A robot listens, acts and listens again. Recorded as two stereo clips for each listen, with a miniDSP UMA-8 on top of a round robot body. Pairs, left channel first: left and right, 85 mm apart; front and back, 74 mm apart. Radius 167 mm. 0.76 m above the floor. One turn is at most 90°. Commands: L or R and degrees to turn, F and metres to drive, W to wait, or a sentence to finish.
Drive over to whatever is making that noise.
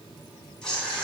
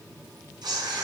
L90
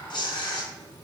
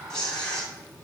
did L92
L80
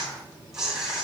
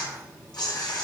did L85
F1.0
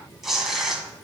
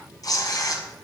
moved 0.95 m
F1.0
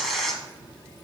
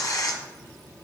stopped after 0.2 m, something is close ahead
Arrived at the tearing paper, straight ahead.